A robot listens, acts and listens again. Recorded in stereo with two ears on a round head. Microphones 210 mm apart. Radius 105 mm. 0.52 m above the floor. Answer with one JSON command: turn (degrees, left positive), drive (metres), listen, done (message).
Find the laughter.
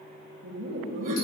{"turn": -35}
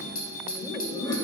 {"turn": 20}
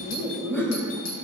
{"turn": 15}
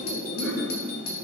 {"turn": 15}
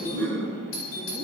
{"turn": 10}
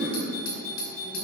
{"done": "Facing the laughter, 2 to 4 m away."}